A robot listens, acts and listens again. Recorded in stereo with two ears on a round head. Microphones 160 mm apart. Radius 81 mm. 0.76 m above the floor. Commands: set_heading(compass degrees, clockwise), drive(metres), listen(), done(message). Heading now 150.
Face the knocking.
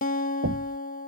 set_heading(220)
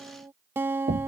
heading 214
set_heading(259)
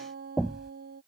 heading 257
done("Facing the knocking.")